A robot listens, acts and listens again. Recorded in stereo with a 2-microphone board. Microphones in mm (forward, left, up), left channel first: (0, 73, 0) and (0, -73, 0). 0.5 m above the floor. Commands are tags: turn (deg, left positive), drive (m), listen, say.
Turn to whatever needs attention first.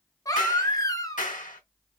<turn deg="25"/>
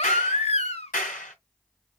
<turn deg="130"/>
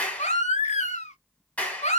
<turn deg="55"/>
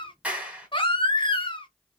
<turn deg="35"/>
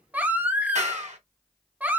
<turn deg="-10"/>
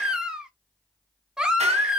<say>Found it: a baby crying, straight ahead.</say>